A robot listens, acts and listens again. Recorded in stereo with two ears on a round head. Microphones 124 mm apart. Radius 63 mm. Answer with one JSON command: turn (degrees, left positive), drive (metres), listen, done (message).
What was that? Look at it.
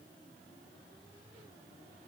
{"listen": true}
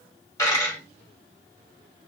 {"turn": 25}
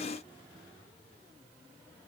{"listen": true}
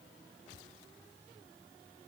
{"done": "I heard a dropped coin, but can't make it out now. It was about straight ahead or 130° left."}